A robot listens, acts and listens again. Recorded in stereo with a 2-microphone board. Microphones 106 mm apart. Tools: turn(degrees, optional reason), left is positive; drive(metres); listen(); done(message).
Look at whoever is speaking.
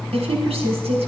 turn(degrees=-90)
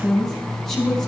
done("Found it: a woman speaking, straight ahead, over 4 m away.")